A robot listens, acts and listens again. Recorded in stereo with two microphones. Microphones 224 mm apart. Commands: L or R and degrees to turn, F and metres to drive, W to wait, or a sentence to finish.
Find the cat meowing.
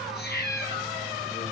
L45
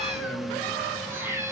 R10
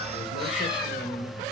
W
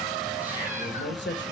W
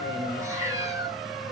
R15
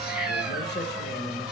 Found it: a cat meowing, straight ahead, 2 to 4 m away.